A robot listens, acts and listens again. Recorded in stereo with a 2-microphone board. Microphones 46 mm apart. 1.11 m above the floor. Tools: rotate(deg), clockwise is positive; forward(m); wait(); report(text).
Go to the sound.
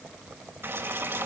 rotate(55)
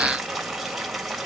forward(1.0)
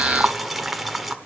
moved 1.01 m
forward(1.0)
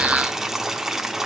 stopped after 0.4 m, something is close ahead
report("I am next to the boiling.")